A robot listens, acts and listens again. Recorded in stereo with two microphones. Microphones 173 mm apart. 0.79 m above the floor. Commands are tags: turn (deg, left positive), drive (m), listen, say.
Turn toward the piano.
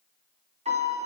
<turn deg="-40"/>
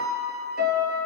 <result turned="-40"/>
<turn deg="-100"/>
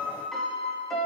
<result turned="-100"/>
<say>Found it: a piano, straight ahead.</say>